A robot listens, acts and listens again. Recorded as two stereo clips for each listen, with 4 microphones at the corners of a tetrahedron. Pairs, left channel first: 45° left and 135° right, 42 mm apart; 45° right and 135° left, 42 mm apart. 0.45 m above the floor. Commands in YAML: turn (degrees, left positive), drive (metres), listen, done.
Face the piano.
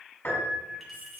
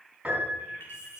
turn: 75
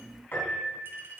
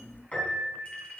turn: 10
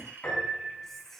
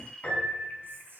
done: "Found it: a piano, straight ahead, over 4 m away."